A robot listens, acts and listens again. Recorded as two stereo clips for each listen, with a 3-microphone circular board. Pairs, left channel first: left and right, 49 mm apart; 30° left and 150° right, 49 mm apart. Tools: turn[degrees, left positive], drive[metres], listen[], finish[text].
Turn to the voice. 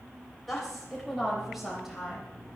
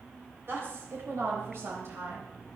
Thought: The woman speaking: 170° right.
Action: turn[-170]
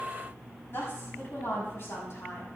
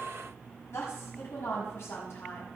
Thought: The woman speaking is now 60° left.
Action: turn[60]
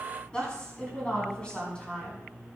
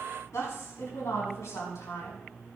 Thought: The woman speaking is now 20° left.
Action: turn[20]
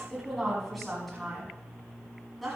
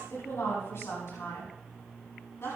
Action: finish[Facing the woman speaking, over 4 m away.]